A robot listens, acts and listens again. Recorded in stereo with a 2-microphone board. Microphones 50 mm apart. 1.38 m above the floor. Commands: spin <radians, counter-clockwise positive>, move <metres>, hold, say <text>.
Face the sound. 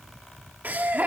spin -0.61
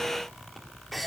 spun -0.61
say Facing the laughter, 2 to 4 m away.